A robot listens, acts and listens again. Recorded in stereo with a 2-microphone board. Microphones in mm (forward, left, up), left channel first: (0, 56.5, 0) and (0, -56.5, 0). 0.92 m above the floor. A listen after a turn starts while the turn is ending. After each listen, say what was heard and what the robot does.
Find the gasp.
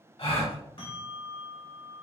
The gasp: about 60° left or 120° left. Turn 60° left.
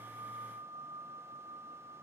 Keep listening.
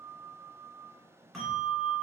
I heard a gasp, but can't make it out now. It was about straight ahead or 60° left.